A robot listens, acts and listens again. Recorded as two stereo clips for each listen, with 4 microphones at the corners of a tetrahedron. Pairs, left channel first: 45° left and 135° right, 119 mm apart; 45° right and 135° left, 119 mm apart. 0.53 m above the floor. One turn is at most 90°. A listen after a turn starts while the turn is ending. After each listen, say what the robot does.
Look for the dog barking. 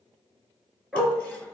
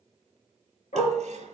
Turn 45° right.
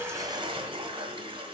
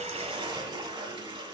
Keep listening.
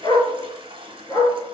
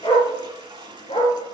Turn 10° right.
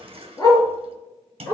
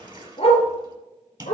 Turn 15° right.
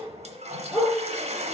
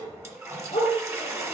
Found it: a dog barking, straight ahead, 2 to 4 m away.